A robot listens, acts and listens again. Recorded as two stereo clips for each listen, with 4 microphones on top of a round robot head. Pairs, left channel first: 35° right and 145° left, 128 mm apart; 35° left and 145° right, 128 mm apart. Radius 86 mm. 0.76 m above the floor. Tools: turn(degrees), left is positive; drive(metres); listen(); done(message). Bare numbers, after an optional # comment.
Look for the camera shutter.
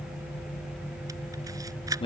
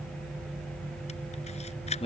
# The camera shutter: 80° left.
turn(80)
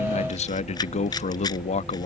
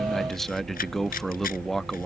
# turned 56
# The camera shutter is now 25° left.
turn(25)
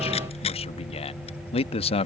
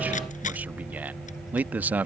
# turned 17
listen()
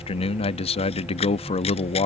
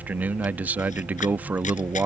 listen()
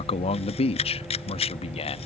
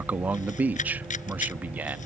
done("Found it: a camera shutter, straight ahead.")